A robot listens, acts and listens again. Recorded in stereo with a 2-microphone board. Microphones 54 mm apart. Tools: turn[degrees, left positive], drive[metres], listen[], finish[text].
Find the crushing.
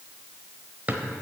Action: listen[]
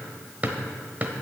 Action: listen[]
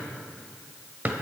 Action: finish[I can't make out crushing to turn to.]